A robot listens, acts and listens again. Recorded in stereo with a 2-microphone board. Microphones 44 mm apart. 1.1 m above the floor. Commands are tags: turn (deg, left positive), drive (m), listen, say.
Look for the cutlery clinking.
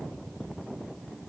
<listen/>
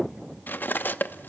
<turn deg="50"/>
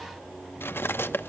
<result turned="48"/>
<turn deg="80"/>
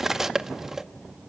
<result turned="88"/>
<turn deg="-10"/>
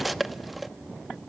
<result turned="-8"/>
<say>Facing the cutlery clinking, under 1 m away.</say>